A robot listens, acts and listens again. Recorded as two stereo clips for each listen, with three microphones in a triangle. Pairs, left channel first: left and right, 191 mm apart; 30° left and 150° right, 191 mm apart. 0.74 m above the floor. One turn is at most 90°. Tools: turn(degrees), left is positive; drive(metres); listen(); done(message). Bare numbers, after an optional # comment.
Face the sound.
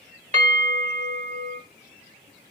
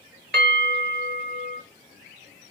# The bell: 140° right.
turn(-90)
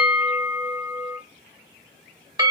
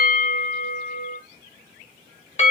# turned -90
# The bell is now 25° right.
turn(-25)
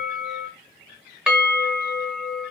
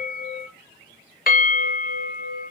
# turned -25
done("Facing the bell, under 1 m away.")